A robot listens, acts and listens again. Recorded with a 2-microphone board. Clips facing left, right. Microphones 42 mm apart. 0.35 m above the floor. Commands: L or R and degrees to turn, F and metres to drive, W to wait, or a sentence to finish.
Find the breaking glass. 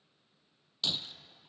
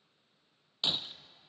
R25
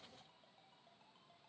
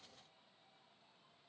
W
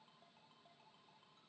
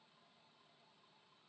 I heard breaking glass, but can't make it out now. It was about straight ahead or 130° right.